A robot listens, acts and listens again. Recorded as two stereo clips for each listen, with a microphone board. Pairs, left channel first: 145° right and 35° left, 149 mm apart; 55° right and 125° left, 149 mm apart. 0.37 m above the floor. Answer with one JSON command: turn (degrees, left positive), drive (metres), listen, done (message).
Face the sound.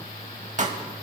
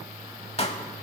{"done": "Facing the pop."}